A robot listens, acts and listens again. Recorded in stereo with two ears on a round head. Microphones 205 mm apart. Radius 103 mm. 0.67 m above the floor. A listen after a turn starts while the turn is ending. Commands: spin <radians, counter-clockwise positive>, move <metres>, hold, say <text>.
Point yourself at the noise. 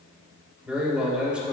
spin -0.52
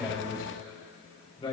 spin 0.44
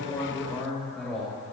say Found it: a man speaking, straight ahead.